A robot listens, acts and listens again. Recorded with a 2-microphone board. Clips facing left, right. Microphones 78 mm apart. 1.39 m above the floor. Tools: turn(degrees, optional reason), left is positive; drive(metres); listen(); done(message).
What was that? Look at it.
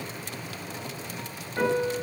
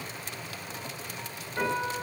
turn(degrees=20, reason="The piano: about 20° left or 160° left.")
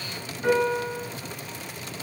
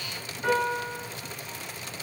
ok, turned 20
done("Found it: a piano, straight ahead, 1 to 2 m away.")